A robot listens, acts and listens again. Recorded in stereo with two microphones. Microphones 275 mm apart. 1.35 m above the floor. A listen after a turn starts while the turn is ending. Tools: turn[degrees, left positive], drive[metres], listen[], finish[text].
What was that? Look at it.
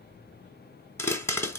Action: turn[30]
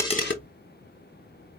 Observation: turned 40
Action: listen[]
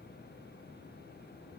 Action: finish[I heard a pop, but can't make it out now. It was about 30° right or 130° left.]